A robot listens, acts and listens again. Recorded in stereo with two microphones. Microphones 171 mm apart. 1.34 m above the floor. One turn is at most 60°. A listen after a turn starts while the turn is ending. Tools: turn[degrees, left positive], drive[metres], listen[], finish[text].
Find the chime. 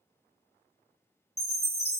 Thought: The chime: about 70° right or 110° right.
Action: turn[-60]
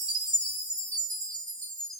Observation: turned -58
Thought: So it is at 45° right.
Action: turn[-45]
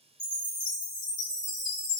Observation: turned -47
Action: finish[Facing the chime, 1 to 2 m away.]